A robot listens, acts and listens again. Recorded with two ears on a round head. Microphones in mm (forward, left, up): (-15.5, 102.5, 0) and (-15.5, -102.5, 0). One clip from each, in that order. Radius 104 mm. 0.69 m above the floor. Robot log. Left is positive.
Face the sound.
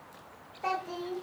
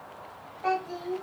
note: The child speaking: about 20° left or 160° left.
cmd yaw +20
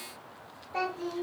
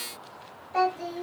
end: Found it: a child speaking, straight ahead.